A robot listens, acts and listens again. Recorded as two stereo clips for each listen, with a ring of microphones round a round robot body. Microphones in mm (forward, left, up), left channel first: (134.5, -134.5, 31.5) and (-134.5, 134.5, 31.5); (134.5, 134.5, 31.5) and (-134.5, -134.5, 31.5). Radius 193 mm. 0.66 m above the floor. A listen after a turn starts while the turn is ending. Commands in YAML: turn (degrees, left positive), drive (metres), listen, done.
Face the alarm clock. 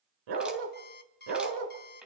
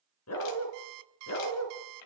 turn: -110
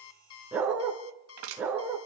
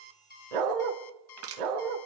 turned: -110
turn: 10
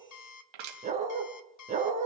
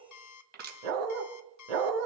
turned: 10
done: "Facing the alarm clock."